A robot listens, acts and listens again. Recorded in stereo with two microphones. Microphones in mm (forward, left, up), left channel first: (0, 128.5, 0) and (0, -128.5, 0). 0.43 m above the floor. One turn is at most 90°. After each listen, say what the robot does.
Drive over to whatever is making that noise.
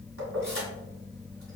Turn 55° right.
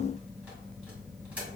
Keep listening.
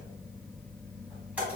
Drive 1.0 m forward.
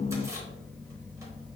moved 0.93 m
Keep listening.
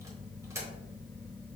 Turn 10° right.
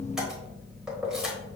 Drive 1.0 m forward.
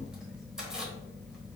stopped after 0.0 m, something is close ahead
I am next to the keys jangling.